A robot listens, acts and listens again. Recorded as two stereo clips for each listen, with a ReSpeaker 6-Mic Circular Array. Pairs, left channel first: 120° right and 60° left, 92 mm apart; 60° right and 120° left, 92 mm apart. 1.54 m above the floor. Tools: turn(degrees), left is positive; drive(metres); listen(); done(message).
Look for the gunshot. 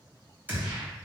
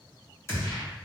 done("Facing the gunshot, 1 to 2 m away.")